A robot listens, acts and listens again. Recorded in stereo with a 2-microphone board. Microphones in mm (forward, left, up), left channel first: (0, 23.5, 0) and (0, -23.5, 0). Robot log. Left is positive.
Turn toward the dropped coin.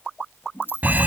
note: The dropped coin: about 50° left or 130° left.
cmd yaw +50
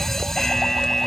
cmd idle
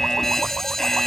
end: I heard a dropped coin, but can't make it out now. It was about straight ahead or 80° left.